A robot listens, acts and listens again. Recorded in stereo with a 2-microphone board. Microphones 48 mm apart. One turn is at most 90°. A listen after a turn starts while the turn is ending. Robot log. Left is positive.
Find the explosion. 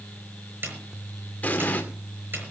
note: The explosion: about 35° left or 145° left.
cmd yaw +35
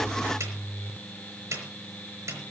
cmd idle
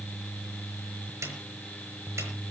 end: I heard an explosion, but can't make it out now. It was about straight ahead or 110° left.